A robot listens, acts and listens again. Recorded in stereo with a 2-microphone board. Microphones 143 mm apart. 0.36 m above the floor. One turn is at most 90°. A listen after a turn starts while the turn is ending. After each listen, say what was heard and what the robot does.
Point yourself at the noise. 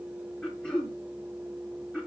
Turn 30° left.
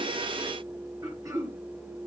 So it is at 25° right. Turn 25° right.
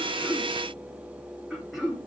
Facing the throat clearing.